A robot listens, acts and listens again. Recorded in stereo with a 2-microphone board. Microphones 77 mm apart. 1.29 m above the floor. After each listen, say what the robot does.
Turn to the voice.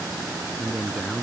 Turn 30° right.
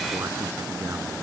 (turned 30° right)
Keep listening.
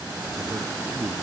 Turn 150° right.
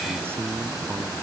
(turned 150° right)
Turn 30° right.
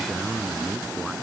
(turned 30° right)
Found it: a man speaking, straight ahead.